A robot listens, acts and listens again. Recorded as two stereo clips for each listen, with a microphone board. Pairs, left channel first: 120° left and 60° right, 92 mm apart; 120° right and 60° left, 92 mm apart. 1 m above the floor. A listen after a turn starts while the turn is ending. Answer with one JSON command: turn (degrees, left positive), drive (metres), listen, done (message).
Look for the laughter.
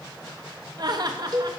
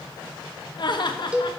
{"turn": -95}
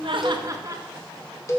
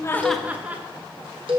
{"turn": -10}
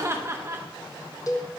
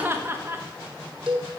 {"done": "Facing the laughter."}